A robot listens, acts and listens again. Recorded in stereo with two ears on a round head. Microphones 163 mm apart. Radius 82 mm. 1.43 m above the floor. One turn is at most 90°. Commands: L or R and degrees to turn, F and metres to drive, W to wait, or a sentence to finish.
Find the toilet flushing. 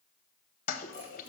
L45
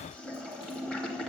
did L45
Facing the toilet flushing, under 1 m away.